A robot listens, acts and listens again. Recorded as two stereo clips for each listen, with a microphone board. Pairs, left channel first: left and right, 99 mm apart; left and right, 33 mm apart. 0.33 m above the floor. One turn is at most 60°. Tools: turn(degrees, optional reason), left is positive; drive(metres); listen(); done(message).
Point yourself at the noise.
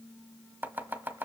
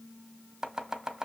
turn(degrees=-20, reason="The chopping: about 20° right or 160° right.")
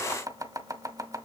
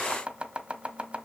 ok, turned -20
turn(degrees=-60, reason="So it is at 140° right.")
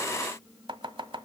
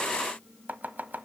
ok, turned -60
turn(degrees=-60, reason="The chopping is now 75° right.")
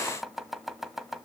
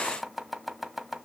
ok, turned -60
done("Facing the chopping, 1 to 2 m away.")